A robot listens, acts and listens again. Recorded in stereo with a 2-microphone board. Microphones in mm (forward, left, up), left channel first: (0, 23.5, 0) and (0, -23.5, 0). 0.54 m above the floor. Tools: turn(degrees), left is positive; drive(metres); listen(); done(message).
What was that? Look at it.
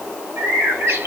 turn(degrees=-70)
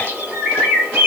turn(degrees=-35)
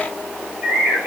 turn(degrees=-20)
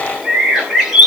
done("Facing the bird.")